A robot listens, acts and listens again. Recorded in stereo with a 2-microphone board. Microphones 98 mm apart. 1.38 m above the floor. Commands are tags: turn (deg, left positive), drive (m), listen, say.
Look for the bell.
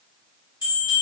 <turn deg="55"/>
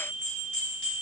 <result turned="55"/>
<say>Found it: a bell, straight ahead.</say>